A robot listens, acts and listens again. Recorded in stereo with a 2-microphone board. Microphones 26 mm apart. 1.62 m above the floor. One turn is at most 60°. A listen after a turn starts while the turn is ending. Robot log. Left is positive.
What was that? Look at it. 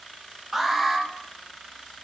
cmd yaw -30
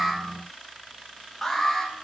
note: So it is at 15° left.
cmd yaw +15
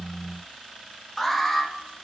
end: Facing the alarm, 1 to 2 m away.